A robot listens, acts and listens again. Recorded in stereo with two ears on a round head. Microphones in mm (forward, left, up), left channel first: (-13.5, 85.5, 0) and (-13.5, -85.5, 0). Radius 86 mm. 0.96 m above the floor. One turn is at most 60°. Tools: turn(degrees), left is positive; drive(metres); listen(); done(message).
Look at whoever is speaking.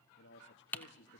turn(degrees=60)
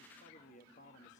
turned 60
turn(degrees=40)
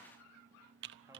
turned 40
listen()
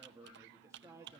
turn(degrees=-15)
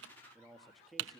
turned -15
done("Found it: a man speaking, straight ahead, 1 to 2 m away.")